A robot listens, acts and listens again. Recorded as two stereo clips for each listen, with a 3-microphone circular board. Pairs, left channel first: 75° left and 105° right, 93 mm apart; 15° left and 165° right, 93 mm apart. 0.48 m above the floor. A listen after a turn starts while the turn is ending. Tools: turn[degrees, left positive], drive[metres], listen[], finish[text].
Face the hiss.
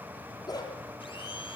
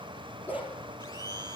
Action: listen[]
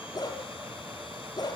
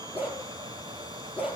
Action: listen[]
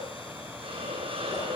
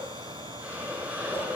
Thought: The hiss: 90° right.
Action: turn[-90]
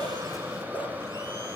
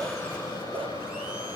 Thought: The hiss is now 35° right.
Action: turn[-35]
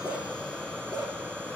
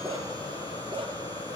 Thought: The hiss is now 15° right.
Action: turn[-15]
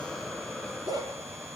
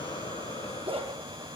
Action: listen[]
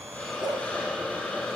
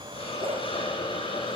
Action: finish[Facing the hiss, over 4 m away.]